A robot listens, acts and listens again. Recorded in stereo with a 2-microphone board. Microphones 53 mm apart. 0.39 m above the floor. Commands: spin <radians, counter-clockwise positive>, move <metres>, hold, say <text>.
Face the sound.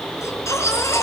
spin 1.31
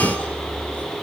hold
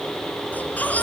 spin 0.52
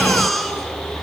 say Facing the baby crying, over 4 m away.